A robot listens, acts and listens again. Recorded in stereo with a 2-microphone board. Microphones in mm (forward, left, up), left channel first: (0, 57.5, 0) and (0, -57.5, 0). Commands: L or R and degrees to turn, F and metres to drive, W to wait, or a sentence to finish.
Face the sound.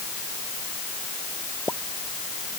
L25
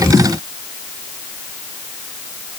W
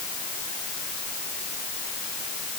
I heard a pop, but can't make it out now. It was about straight ahead or 130° left.